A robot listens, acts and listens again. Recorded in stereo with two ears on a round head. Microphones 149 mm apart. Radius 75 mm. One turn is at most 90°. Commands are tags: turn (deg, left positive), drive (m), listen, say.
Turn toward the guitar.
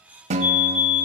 <turn deg="-40"/>
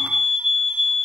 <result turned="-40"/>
<listen/>
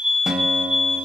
<say>Found it: a guitar, straight ahead.</say>